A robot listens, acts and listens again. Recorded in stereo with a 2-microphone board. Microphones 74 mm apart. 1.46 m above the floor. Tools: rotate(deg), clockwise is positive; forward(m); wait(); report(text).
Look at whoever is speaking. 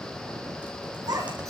rotate(65)
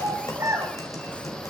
rotate(40)
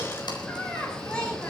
rotate(-10)
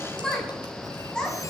rotate(-10)
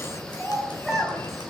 report("Facing the child speaking, over 4 m away.")